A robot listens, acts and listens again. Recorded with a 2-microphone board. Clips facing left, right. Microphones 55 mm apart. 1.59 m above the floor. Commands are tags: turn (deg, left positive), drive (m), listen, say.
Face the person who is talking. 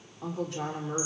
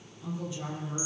<turn deg="90"/>
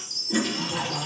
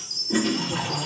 <turn deg="-15"/>
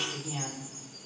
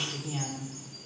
<say>Found it: a woman speaking, straight ahead.</say>